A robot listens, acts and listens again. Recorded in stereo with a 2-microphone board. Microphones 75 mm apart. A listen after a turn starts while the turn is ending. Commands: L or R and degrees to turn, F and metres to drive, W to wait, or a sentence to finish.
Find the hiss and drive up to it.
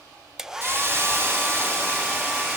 R35
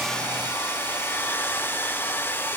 W
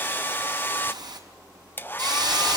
R110
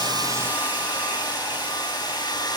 W
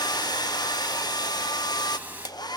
R25
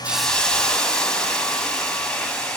L10
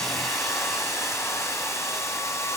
W
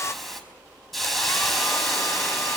F1.0
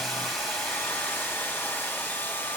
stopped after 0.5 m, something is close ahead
W
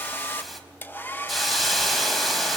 Blocked. The hiss is further on, straight ahead.